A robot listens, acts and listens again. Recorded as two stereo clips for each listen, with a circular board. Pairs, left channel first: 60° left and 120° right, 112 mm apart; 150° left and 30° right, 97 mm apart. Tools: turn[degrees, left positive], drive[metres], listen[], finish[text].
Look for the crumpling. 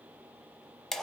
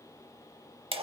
Action: listen[]
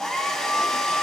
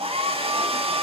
Action: listen[]
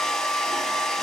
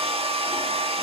Action: finish[I can't make out crumpling, only a hair dryer.]